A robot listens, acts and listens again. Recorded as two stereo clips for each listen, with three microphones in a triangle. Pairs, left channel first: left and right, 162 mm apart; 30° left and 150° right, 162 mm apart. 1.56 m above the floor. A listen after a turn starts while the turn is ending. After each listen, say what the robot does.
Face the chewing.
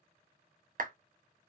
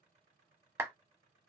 Keep listening.
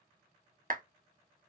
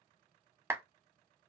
Keep listening.
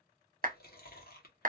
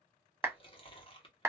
Turn 85° left.
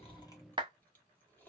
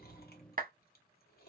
Turn 10° left.
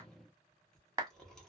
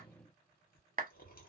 Facing the chewing.